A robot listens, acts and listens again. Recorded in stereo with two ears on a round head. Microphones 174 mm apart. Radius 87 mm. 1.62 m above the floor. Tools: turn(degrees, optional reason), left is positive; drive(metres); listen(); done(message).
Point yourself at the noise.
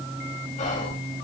turn(degrees=40, reason="The whispering: about 40° left or 140° left.")
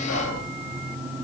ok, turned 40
turn(degrees=100, reason="So it is at 100° left.")
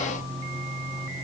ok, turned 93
listen()
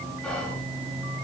done("Facing the whispering, 2 to 4 m away.")